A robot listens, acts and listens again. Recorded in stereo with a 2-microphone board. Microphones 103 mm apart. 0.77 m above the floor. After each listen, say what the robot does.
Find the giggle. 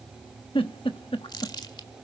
Turn 55° left.
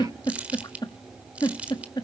Turn 50° left.
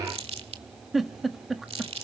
Found it: a giggle, straight ahead, 1 to 2 m away.